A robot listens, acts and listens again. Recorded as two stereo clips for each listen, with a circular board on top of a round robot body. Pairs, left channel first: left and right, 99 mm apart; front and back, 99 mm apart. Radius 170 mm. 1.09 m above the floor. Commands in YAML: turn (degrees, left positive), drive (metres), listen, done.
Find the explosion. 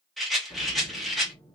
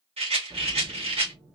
turn: 145
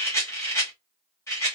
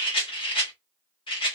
done: "Facing where the explosion came from. I can't hear it now."